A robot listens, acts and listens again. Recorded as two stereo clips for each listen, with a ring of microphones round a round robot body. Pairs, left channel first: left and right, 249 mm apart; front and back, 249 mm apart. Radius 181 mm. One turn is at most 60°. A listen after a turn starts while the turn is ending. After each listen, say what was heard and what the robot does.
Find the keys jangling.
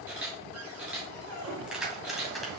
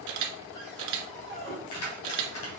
Facing the keys jangling, 2 to 4 m away.